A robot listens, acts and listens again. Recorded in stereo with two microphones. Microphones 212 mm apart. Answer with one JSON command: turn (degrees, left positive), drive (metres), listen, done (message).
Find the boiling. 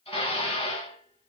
{"listen": true}
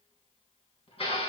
{"listen": true}
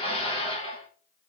{"done": "I can't make out boiling, only dishes clattering."}